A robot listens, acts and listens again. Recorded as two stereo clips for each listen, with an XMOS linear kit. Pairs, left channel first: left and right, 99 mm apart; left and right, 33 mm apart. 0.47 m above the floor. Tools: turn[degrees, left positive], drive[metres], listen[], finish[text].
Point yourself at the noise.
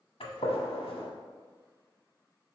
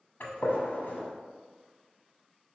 Thought: The gunshot: about 75° left or 105° left.
Action: turn[75]
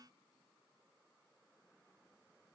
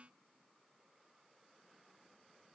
Action: listen[]
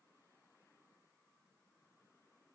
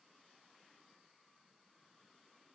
Action: finish[I heard a gunshot, but can't make it out now. It was about straight ahead or 30° left.]